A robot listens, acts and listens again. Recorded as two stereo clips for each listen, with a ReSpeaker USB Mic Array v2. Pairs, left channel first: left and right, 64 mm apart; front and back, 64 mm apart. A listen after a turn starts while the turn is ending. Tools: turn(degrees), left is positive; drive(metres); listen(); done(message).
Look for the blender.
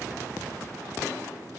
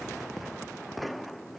listen()
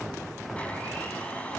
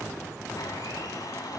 turn(degrees=20)
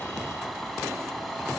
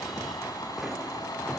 done("Facing the blender, over 4 m away.")